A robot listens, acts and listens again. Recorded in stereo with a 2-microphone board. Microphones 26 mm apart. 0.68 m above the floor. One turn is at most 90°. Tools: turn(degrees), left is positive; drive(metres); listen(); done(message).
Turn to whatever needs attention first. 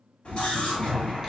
turn(degrees=45)
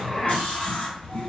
turn(degrees=75)
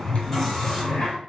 turn(degrees=10)
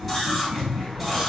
done("Facing the scream.")